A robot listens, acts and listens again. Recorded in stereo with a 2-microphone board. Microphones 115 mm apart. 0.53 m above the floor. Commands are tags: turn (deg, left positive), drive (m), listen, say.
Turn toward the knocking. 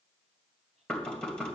<turn deg="30"/>
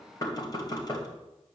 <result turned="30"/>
<turn deg="145"/>
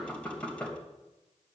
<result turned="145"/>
<turn deg="10"/>
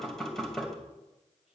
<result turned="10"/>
<say>Found it: knocking, straight ahead.</say>